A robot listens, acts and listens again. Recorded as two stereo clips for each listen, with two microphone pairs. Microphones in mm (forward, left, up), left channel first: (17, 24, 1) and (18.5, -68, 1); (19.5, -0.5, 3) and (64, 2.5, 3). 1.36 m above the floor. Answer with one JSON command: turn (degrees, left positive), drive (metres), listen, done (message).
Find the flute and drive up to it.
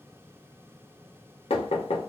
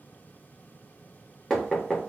{"listen": true}
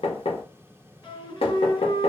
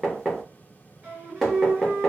{"turn": 55}
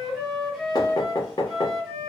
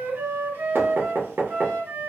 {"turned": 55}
{"drive": 1.0}
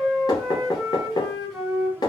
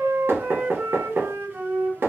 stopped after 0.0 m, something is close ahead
{"done": "Blocked. The flute is further on, straight ahead."}